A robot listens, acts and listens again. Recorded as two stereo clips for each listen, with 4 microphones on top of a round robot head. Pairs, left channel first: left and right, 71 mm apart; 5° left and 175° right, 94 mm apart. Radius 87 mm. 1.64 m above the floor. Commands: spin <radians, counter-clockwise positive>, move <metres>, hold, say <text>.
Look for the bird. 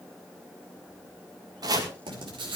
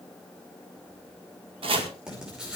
hold
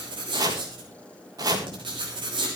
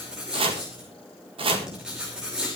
hold
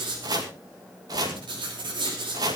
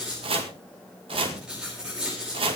say I can't make out a bird, only writing and chopping.